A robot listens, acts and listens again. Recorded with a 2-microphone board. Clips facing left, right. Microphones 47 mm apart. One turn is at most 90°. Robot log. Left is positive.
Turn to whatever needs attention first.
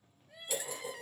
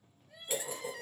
cmd yaw +30
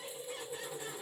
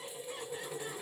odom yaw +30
cmd idle
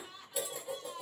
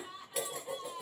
note: So it is at 20° right.
cmd yaw -20
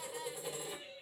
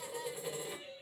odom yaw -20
end: Facing the crying, under 1 m away.